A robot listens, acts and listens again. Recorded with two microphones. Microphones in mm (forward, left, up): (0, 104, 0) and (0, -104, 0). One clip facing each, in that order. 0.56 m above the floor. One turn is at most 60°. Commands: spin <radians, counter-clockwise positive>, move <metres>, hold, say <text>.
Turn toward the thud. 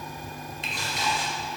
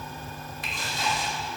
hold
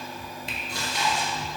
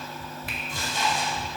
hold
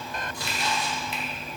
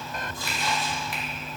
say I can't make out a thud to turn to.